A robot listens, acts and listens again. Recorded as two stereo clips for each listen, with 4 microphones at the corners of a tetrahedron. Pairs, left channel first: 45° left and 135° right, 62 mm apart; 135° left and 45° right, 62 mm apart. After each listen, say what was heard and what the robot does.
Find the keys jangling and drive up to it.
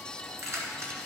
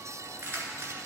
The keys jangling: 95° right. Turn 95° right.
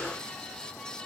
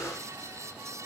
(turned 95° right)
Keep listening.
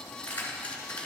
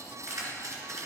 The keys jangling is now 20° right. Turn 20° right.
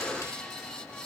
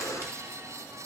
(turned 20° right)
Keep listening.
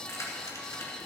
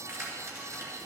Drive 1.0 m forward.
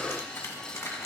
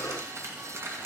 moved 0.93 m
Drive 1.0 m forward.
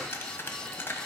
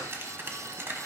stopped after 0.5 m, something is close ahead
I am next to the keys jangling.